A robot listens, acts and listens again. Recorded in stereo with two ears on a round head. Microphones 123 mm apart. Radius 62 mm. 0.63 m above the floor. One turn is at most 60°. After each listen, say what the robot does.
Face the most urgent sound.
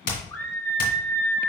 Turn 15° left.
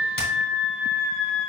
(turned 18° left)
Found it: a scream, straight ahead, 1 to 2 m away.